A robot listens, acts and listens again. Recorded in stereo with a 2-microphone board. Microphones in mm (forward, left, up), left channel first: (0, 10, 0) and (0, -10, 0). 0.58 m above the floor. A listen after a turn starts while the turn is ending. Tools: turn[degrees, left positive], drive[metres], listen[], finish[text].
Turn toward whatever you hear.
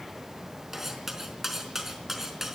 Action: turn[-30]
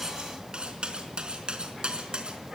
Thought: So it is at 135° right.
Action: turn[-135]
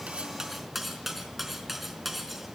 Thought: The cutlery clinking is now 10° right.
Action: turn[-10]
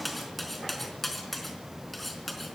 Action: finish[Facing the cutlery clinking.]